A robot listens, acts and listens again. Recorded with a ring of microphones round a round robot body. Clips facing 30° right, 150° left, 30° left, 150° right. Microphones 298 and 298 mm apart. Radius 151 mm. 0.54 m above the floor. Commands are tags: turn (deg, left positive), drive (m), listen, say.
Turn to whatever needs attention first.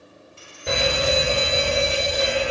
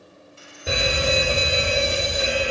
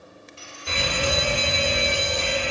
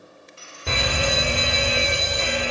<turn deg="-125"/>
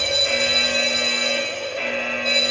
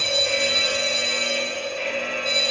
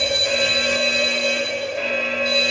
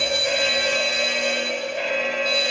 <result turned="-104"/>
<turn deg="-15"/>
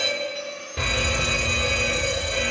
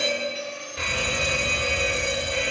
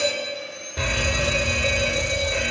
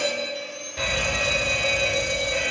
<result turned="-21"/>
<say>Found it: a fire alarm, straight ahead.</say>